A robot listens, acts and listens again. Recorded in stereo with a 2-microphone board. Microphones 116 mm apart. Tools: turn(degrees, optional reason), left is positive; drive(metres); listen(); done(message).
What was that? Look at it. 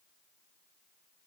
listen()
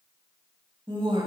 turn(degrees=-40, reason="The woman speaking: about 40° right or 140° right.")
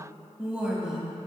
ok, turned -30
done("Found it: a woman speaking, straight ahead.")